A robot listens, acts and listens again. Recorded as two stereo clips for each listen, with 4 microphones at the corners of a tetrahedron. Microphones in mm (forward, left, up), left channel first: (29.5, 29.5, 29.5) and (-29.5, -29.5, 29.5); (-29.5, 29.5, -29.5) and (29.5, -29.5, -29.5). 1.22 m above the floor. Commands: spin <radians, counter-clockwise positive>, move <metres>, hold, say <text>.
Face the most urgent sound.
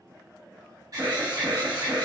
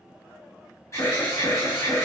spin -2.97
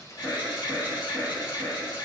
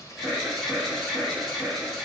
spin 0.79
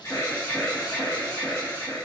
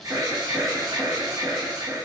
say Facing the alarm, 1 to 2 m away.